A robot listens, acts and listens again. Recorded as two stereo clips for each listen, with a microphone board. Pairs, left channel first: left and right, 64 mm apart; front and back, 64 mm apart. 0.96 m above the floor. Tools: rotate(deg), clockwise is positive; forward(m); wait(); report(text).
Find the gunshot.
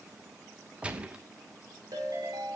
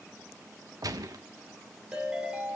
rotate(160)
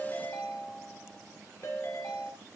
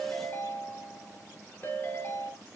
report("I heard a gunshot from this way, but can't make it out now.")